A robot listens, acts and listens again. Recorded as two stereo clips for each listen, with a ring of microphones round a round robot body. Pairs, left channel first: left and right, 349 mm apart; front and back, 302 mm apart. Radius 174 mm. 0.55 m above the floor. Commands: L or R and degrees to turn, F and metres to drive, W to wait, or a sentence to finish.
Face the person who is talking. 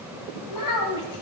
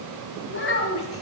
L50
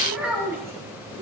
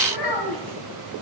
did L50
Found it: a child speaking, straight ahead, 2 to 4 m away.